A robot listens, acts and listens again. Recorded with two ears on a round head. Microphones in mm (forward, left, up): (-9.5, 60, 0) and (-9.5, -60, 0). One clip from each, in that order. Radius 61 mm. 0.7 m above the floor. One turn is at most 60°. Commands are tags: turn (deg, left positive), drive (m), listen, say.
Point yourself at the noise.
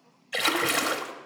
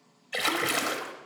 <turn deg="30"/>
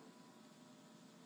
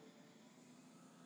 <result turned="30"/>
<listen/>
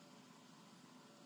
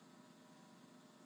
<say>I heard a splash, but can't make it out now. It was about 30° right or 150° left.</say>